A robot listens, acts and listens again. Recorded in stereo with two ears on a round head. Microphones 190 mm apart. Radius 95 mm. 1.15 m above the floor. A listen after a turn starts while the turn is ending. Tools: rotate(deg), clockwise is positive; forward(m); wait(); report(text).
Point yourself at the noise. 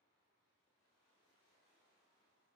wait()
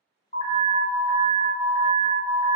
rotate(-30)
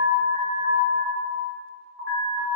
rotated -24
report("Facing the alarm.")